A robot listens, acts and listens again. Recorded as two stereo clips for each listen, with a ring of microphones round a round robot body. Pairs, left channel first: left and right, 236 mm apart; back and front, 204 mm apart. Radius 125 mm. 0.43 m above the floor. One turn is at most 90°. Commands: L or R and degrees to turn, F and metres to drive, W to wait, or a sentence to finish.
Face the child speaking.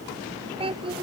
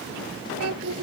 R20
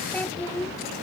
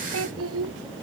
L10
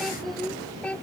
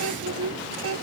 Found it: a child speaking, straight ahead.